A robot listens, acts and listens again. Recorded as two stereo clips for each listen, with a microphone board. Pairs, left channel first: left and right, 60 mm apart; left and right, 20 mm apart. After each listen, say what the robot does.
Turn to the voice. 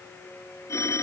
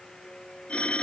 Keep listening.
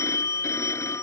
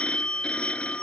Keep listening.
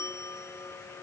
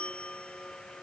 I can't make out anyone speaking to turn to.